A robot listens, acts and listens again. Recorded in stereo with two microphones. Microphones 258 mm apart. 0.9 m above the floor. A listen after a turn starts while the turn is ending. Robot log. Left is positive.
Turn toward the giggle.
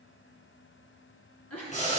note: The giggle: about 75° left or 105° left.
cmd yaw +75
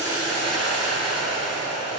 cmd idle
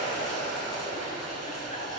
cmd idle
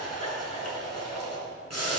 end: I heard a giggle, but can't make it out now. It was about straight ahead or 30° left.